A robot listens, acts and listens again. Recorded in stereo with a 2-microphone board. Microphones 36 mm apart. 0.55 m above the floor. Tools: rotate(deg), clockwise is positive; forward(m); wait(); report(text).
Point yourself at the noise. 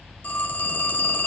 rotate(-55)
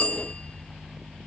rotate(-45)
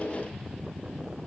wait()
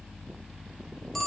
report("Found it: a phone ringing, straight ahead, under 1 m away.")